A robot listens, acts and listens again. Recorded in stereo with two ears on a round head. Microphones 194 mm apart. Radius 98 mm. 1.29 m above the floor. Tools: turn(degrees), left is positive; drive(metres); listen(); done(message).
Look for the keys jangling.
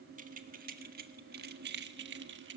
turn(degrees=-60)
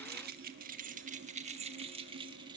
turn(degrees=-20)
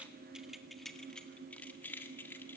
turn(degrees=10)
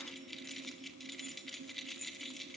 done("Facing the keys jangling, 1 to 2 m away.")